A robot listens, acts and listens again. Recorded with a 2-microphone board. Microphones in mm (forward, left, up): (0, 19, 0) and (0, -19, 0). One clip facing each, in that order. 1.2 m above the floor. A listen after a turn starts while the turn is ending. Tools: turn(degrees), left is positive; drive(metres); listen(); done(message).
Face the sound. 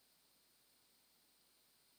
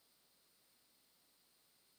listen()
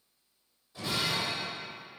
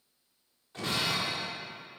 turn(degrees=-50)
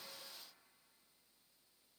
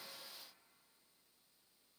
listen()
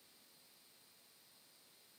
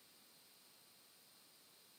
done("I heard breaking glass, but can't make it out now. It was about straight ahead or 80° right.")